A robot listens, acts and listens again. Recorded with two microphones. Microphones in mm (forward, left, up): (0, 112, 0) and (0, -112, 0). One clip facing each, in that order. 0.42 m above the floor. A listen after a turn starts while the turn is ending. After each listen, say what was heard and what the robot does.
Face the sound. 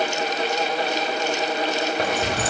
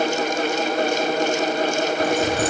The keys jangling: about 70° left or 110° left. Turn 70° left.
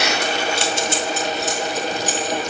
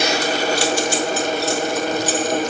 So it is at 15° left. Turn 15° left.
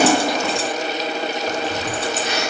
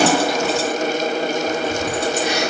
The keys jangling is now 10° right. Turn 10° right.
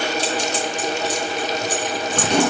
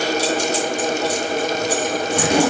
The keys jangling is now 10° right. Turn 10° right.
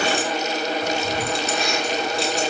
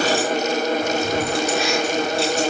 Found it: keys jangling, straight ahead, 2 to 4 m away.